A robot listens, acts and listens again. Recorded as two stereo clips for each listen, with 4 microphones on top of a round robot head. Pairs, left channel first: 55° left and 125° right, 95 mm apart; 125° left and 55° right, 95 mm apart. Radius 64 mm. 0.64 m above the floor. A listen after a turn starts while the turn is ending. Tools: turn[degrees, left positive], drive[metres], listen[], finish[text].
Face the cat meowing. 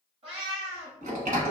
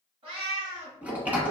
Thought: The cat meowing: 90° right.
Action: turn[-90]
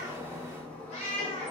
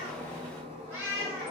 Thought: The cat meowing is now 20° left.
Action: turn[20]
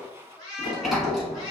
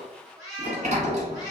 Action: finish[Found it: a cat meowing, straight ahead.]